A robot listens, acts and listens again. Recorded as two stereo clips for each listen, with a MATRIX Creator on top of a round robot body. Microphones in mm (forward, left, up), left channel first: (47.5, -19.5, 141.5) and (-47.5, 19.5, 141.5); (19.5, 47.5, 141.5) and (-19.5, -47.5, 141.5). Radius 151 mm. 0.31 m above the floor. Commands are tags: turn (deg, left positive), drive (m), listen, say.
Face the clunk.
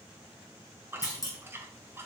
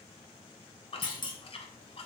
<turn deg="30"/>
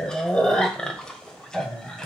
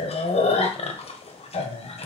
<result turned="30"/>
<say>I heard a clunk from this way, but can't make it out now.</say>